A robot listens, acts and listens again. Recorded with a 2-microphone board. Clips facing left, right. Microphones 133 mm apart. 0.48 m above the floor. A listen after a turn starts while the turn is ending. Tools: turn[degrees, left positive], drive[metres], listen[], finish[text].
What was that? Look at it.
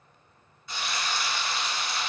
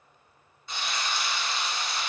Thought: The frying: about 25° right or 155° right.
Action: turn[-25]
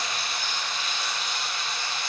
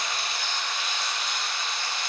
Thought: So it is at 125° right.
Action: turn[-125]
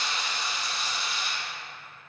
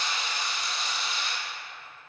Action: finish[Facing the frying.]